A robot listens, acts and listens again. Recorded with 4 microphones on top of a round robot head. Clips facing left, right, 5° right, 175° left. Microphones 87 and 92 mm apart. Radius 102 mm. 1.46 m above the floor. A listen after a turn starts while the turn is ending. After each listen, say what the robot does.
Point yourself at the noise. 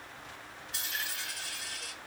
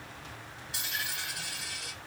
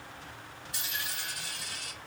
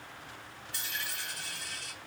Turn 30° right.
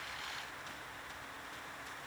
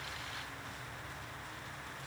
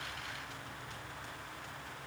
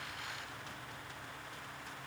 I heard a dropped coin from this way, but can't make it out now.